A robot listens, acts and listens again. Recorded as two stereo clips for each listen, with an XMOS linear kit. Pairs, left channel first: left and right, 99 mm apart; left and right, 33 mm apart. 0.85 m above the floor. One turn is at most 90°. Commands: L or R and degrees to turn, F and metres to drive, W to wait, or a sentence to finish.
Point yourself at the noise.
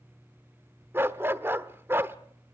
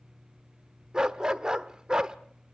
R25
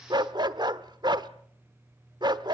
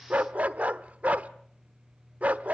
R90
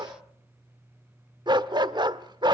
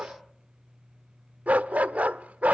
R50
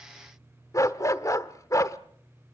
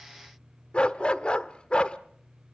L35
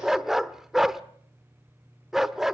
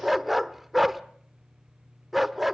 Found it: a dog barking, straight ahead, 1 to 2 m away.